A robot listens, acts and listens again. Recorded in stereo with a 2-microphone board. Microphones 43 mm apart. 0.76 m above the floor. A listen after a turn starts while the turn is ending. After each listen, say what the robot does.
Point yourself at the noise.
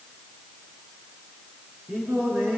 Turn 60° right.
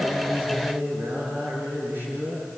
Turn 55° right.
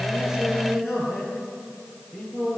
Facing the singing, over 4 m away.